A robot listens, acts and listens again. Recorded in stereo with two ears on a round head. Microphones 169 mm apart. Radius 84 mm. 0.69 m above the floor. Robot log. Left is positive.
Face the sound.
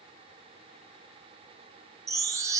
note: The chime: about 15° right or 165° right.
cmd yaw -15
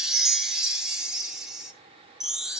end: Facing the chime.